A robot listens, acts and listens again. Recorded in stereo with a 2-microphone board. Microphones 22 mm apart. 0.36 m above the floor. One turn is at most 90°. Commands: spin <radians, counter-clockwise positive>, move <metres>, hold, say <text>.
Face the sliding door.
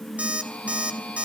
hold
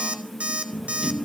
spin -0.44
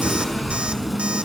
say Facing the sliding door.